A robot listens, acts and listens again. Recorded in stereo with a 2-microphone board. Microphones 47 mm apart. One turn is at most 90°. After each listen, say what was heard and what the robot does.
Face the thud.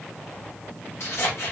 Keep listening.
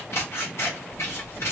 Keep listening.
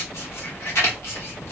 I can't make out a thud to turn to.